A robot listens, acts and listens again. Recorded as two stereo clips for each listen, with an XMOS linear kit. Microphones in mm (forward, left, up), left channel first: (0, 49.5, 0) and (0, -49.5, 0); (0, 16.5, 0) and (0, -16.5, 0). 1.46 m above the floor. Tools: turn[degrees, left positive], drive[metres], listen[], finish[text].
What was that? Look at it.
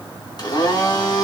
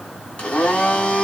Thought: The blender: about 45° left or 135° left.
Action: turn[45]
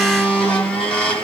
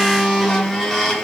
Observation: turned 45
Thought: So it is at 10° left.
Action: turn[10]
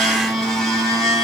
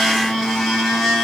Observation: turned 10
Action: finish[Found it: a blender, straight ahead, 1 to 2 m away.]